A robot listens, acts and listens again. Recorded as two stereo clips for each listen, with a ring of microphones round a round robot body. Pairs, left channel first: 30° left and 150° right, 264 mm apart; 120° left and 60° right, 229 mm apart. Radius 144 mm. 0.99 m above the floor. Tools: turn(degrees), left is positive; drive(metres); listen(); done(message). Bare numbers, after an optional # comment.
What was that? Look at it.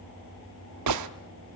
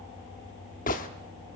# The gunshot: 175° right.
turn(-175)
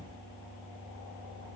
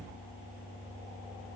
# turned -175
done("I heard a gunshot from this way, but can't make it out now.")